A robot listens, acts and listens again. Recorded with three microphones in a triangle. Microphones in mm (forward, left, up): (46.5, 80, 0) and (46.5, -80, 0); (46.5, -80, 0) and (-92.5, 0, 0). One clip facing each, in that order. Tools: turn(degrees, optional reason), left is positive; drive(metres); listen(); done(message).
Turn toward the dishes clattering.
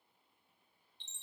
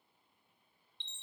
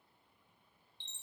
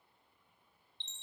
listen()
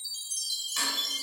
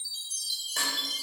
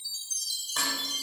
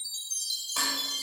turn(degrees=-125, reason="The dishes clattering: 125° right.")
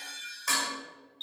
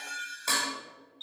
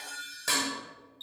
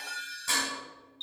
turn(degrees=-30, reason="The dishes clattering is now 30° right.")
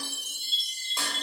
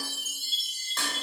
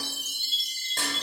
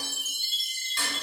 turn(degrees=10, reason="The dishes clattering is now 10° left.")
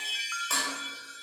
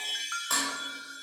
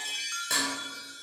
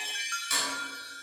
done("Found it: dishes clattering, straight ahead.")